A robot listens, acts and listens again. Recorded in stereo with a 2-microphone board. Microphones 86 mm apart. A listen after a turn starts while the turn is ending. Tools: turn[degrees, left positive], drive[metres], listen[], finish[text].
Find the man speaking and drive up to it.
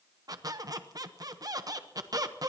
Action: listen[]
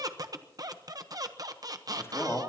Thought: The man speaking: about 30° left or 150° left.
Action: turn[30]
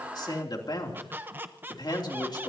Thought: So it is at 120° left.
Action: turn[120]
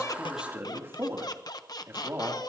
Thought: The man speaking is now 25° right.
Action: turn[-25]
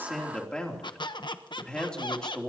Thought: The man speaking is now 10° left.
Action: turn[10]
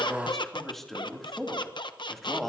Action: drive[1.0]
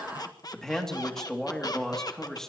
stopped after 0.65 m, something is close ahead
Action: finish[Something is in my way. I am facing the man speaking but have not reached it.]